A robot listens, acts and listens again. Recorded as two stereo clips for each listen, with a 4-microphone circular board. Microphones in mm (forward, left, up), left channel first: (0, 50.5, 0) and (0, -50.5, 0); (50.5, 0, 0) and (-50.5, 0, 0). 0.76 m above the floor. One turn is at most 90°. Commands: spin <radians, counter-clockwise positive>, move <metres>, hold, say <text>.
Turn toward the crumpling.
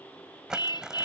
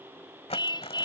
say Found it: crumpling, straight ahead.